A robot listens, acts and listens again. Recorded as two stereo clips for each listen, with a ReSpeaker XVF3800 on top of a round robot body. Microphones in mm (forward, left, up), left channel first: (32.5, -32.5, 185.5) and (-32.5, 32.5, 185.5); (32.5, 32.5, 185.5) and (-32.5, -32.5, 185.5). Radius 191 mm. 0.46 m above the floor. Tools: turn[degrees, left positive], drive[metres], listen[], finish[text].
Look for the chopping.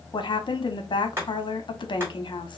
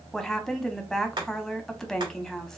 Thought: The chopping: 160° right.
Action: turn[-160]
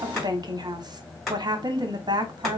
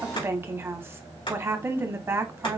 Thought: The chopping is now 45° left.
Action: turn[45]
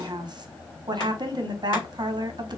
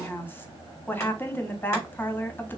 Action: listen[]
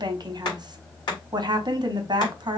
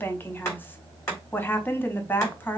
Thought: The chopping is now 10° right.
Action: turn[-10]
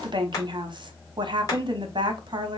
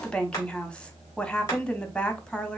Action: finish[Facing the chopping.]